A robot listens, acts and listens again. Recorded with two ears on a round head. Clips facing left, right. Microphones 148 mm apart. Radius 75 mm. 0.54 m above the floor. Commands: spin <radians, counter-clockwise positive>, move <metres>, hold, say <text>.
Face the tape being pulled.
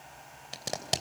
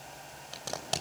spin 0.35
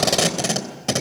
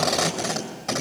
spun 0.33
spin 2.53
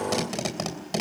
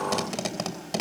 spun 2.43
say Facing the tape being pulled, 2 to 4 m away.